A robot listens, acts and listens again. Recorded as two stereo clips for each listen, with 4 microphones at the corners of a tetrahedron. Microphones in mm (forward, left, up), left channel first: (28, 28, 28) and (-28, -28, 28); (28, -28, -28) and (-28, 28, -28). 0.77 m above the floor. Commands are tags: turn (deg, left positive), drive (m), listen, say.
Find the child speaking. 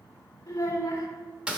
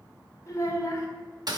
<say>Found it: a child speaking, straight ahead.</say>